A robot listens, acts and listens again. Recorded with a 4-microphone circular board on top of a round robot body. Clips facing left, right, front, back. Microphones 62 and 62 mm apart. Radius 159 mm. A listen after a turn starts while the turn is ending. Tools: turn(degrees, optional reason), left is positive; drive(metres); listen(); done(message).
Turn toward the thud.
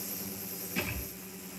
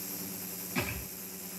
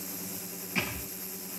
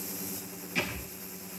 turn(degrees=-65, reason="The thud: 65° right.")
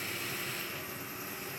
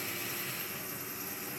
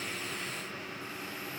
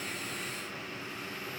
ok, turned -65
done("I heard a thud from this way, but can't make it out now.")